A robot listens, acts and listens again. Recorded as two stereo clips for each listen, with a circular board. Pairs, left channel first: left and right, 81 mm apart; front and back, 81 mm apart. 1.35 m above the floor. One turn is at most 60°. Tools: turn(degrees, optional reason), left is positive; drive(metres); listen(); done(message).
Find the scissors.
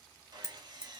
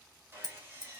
turn(degrees=35, reason="The scissors: 35° left.")
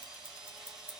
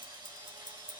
turn(degrees=-15, reason="The scissors is now 15° right.")
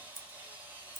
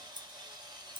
done("Facing the scissors.")